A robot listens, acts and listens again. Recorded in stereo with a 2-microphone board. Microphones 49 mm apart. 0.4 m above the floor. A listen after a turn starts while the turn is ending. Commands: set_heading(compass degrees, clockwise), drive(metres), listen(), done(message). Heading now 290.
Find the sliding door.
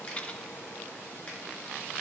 listen()
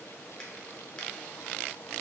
listen()
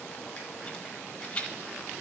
done("I can't make out a sliding door to turn to.")